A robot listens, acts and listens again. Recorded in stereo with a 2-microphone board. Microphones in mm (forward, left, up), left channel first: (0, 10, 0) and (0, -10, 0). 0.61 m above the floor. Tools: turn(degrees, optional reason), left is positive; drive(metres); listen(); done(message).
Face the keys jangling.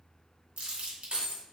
turn(degrees=-60, reason="The keys jangling: about 60° right or 120° right.")
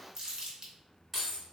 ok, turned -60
done("Facing the keys jangling.")